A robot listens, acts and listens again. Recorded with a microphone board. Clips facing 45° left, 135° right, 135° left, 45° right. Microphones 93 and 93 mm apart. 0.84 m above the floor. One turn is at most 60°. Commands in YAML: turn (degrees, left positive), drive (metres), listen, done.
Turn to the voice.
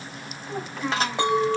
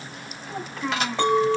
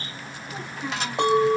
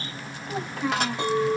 turn: -40
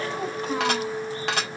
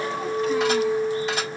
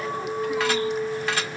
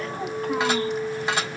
listen: true
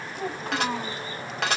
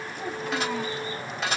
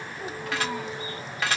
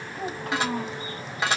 done: "Facing the child speaking, 1 to 2 m away."